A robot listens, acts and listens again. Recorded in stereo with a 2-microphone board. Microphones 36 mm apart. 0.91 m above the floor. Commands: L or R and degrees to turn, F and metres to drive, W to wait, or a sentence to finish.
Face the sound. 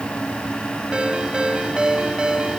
R25
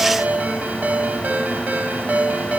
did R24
R130
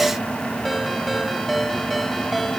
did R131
Facing the ringtone.